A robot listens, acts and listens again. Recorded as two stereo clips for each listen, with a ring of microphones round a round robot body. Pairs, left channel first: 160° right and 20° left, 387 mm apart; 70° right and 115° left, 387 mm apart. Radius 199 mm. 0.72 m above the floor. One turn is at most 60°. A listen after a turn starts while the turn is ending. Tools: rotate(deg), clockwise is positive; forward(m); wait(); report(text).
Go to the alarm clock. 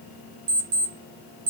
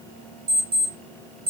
rotate(-45)
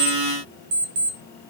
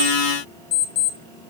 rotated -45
forward(1.0)
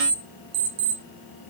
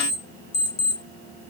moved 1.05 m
forward(1.0)
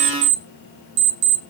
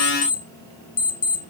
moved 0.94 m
forward(1.0)
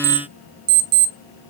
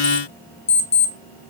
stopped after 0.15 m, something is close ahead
rotate(-10)
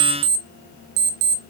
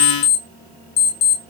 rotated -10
report("Arrived at the alarm clock, straight ahead.")